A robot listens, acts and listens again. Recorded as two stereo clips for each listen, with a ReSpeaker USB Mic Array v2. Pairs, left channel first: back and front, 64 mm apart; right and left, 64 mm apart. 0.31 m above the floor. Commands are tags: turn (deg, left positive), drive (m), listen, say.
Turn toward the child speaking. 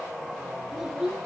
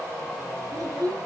<turn deg="95"/>
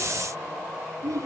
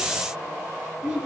<turn deg="15"/>
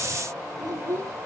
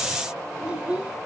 <turn deg="15"/>
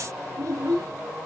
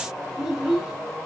<turn deg="10"/>
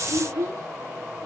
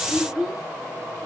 <turn deg="10"/>
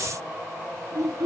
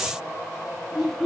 <say>Facing the child speaking.</say>